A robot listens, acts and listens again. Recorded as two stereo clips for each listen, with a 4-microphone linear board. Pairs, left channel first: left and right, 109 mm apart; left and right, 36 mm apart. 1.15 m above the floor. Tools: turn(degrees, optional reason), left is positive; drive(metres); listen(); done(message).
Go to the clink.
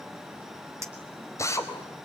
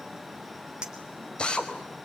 turn(degrees=-25, reason="The clink: about 25° right or 155° right.")
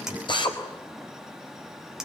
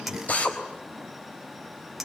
drive(metres=1.0)
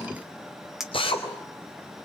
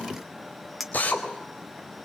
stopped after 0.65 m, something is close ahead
done("Blocked. The clink is further on, straight ahead.")